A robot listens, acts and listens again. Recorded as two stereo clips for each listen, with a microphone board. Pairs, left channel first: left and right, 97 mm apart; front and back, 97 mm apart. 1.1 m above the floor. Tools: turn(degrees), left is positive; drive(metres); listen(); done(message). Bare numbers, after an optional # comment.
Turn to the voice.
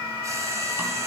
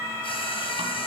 listen()
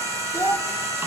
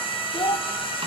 # The child speaking: 30° left.
turn(30)
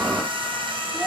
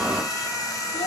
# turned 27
listen()
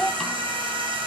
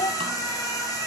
done("Found it: a child speaking, straight ahead, 1 to 2 m away.")